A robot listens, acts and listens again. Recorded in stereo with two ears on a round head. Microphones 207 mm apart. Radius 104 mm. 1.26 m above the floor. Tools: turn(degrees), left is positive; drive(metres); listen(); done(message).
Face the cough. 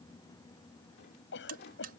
turn(degrees=55)
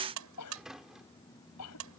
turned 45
turn(degrees=80)
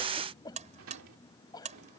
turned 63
turn(degrees=15)
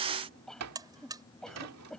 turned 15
done("Found it: a cough, straight ahead.")